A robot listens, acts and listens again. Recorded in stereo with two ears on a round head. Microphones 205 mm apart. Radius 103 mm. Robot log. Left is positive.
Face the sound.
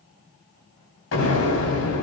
note: The explosion: about 65° left or 115° left.
cmd yaw +65
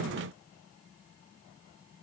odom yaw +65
cmd idle
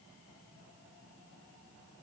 end: I heard an explosion, but can't make it out now. It was about straight ahead or 50° left.